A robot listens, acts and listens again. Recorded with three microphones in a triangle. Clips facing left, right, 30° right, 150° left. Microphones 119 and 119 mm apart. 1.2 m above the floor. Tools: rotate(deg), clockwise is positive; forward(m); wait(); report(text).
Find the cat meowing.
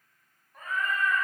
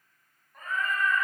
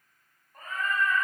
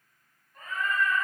rotate(-10)
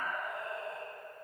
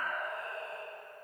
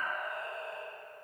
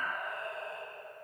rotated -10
rotate(-20)
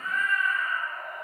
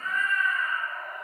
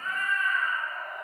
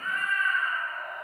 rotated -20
rotate(-20)
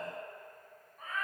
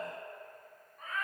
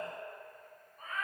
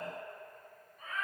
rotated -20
report("Facing the cat meowing.")